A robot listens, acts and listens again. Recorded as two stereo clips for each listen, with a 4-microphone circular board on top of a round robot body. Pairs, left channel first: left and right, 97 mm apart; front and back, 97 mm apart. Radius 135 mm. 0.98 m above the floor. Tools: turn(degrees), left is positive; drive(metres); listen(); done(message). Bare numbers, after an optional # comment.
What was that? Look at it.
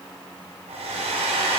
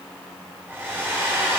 # The hair dryer: 110° right.
turn(-110)
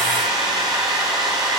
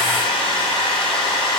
# The hair dryer is now 40° right.
turn(-40)
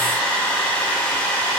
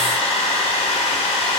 # The hair dryer is now 15° left.
turn(15)
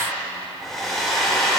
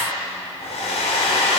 done("Facing the hair dryer.")